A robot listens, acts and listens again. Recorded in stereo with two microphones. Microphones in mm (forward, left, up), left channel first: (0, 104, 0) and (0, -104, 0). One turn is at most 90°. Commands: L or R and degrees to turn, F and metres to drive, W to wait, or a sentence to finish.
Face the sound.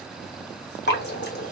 L65
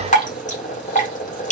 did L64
L45
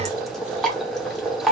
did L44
Facing the dripping, under 1 m away.